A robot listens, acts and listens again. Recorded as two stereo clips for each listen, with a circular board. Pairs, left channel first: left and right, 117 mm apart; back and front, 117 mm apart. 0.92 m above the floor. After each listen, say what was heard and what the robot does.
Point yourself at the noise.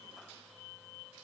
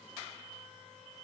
Keep listening.
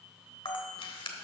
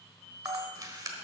The camera shutter: 55° left. Turn 55° left.
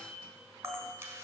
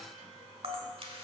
The camera shutter is now 25° right. Turn 25° right.
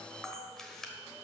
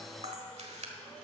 Facing the camera shutter.